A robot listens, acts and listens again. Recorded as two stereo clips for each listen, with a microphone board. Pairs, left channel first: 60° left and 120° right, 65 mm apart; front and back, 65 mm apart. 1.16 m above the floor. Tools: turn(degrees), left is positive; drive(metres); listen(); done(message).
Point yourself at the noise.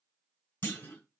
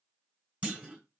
turn(degrees=110)
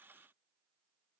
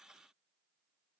done("I heard a clunk from this way, but can't make it out now.")